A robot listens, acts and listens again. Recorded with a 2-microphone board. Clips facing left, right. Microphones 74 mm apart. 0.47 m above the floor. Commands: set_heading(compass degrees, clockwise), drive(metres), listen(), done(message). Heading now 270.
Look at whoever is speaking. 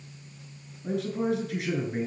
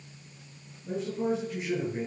set_heading(205)
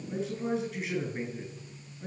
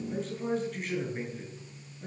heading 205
done("Facing the man speaking, over 4 m away.")